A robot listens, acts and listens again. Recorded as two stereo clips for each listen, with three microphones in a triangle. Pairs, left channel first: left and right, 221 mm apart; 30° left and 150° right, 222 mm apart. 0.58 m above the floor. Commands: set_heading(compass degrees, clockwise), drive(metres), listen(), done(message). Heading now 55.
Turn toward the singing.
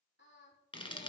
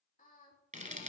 set_heading(345)
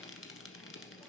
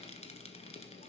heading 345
listen()
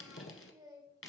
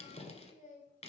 set_heading(5)
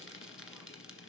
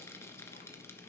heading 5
listen()
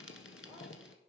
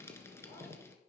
listen()
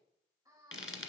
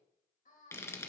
set_heading(25)
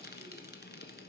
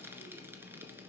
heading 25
listen()
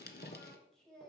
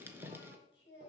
done("Facing the singing, 2 to 4 m away.")